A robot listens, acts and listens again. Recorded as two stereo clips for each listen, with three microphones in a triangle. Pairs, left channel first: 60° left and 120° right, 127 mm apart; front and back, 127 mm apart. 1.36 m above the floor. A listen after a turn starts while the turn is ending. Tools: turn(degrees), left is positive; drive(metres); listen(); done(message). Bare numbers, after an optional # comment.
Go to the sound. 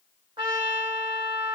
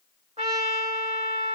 # The trumpet: 160° right.
turn(-160)
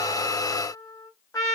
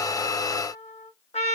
drive(1.0)
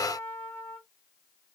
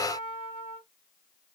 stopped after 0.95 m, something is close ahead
done("I am next to the trumpet.")